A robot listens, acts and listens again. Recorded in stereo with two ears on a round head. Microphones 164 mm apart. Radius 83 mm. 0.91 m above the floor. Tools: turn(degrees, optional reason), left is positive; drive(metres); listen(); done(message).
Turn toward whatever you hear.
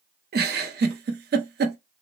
turn(degrees=-60, reason="The giggle: about 60° right or 120° right.")
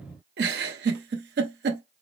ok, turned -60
turn(degrees=-55, reason="So it is at 55° right.")
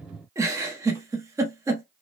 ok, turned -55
turn(degrees=-15, reason="The giggle is now 15° right.")
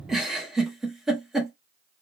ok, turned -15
done("Found it: a giggle, straight ahead, under 1 m away.")